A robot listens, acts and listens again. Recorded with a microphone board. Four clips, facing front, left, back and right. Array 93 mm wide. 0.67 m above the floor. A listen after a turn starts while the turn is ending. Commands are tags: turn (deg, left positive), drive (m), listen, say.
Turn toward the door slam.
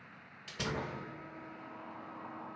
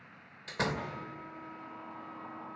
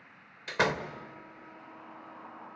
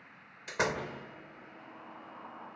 <turn deg="-165"/>
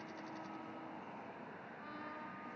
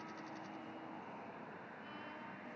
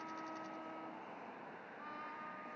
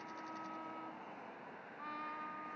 <say>I heard a door slam from this way, but can't make it out now.</say>